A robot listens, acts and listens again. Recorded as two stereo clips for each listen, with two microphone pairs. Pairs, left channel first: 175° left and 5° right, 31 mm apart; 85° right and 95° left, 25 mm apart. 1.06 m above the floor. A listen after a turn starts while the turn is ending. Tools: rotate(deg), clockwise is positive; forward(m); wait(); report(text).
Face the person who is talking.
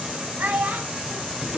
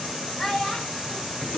rotate(25)
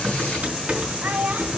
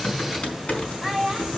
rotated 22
report("Found it: a child speaking, straight ahead.")